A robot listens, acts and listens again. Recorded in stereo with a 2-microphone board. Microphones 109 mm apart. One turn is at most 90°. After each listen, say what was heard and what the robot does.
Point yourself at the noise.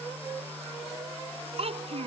The child speaking: about 65° right or 115° right. Turn 65° right.
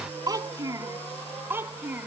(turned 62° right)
So it is at 15° right. Turn 15° right.
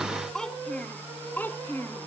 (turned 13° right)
The child speaking is now 20° left. Turn 20° left.
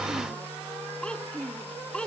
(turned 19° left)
The child speaking is now 10° left. Turn 10° left.
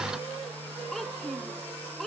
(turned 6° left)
Found it: a child speaking, straight ahead.